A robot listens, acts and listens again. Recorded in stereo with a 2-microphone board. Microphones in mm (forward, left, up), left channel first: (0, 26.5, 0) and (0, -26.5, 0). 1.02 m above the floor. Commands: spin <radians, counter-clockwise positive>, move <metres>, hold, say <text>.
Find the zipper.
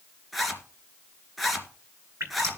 spin 0.52
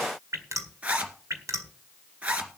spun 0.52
spin -0.44
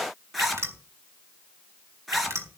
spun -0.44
say Facing the zipper.